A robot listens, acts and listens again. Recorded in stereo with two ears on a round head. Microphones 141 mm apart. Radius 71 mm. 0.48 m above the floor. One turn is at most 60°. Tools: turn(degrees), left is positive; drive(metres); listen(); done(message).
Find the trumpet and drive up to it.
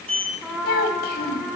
turn(degrees=-30)
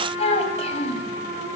turn(degrees=-60)
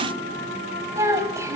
turn(degrees=-60)
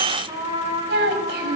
turn(degrees=-25)
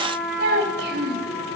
drive(metres=1.0)
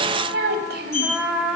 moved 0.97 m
drive(metres=1.0)
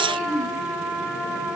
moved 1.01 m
drive(metres=1.0)
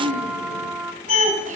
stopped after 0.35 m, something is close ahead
done("I am next to the trumpet.")